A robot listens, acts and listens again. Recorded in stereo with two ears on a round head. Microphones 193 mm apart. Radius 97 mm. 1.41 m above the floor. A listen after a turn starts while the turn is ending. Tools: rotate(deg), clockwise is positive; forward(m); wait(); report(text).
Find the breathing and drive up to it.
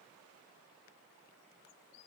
wait()
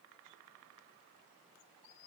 wait()
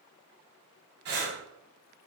rotate(50)
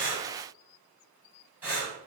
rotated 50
rotate(10)
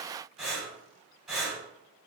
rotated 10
forward(1.0)
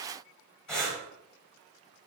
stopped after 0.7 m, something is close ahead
report("Arrived at the breathing, straight ahead.")